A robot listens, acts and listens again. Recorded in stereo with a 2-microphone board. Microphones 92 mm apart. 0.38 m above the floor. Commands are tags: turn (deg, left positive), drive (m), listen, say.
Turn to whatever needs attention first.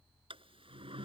<listen/>
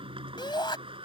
<turn deg="55"/>
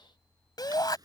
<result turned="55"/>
<turn deg="55"/>
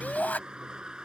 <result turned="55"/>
<turn deg="20"/>
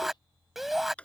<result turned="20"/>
<say>Found it: a shout, straight ahead.</say>